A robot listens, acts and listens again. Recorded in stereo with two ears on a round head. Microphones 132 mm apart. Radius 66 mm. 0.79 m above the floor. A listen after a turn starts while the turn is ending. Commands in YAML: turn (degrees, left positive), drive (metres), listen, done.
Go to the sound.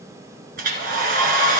turn: -65
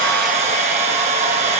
turn: -50
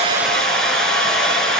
drive: 1.0
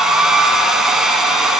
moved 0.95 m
drive: 1.0
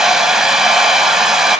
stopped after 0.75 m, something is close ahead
done: "Arrived at the hair dryer, straight ahead."